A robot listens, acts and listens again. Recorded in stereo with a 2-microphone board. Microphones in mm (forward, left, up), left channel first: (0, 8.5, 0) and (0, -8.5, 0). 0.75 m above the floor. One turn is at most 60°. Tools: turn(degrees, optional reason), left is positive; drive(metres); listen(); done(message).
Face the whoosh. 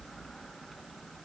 listen()
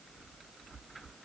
listen()
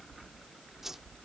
turn(degrees=-25, reason="The whoosh: about 25° right or 155° right.")
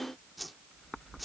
done("Found it: a whoosh, straight ahead.")